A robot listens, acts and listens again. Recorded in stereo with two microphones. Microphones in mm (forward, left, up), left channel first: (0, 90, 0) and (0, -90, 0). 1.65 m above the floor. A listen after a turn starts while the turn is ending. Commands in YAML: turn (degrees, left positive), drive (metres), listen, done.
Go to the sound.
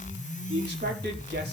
turn: -65
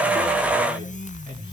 listen: true
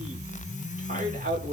turn: -50
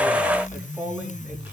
drive: 1.0
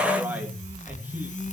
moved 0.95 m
turn: -10
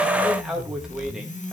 drive: 1.0
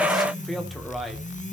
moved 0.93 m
drive: 1.0
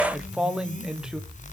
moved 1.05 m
drive: 1.0
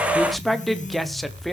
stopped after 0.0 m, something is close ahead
done: "Arrived at the man speaking, straight ahead."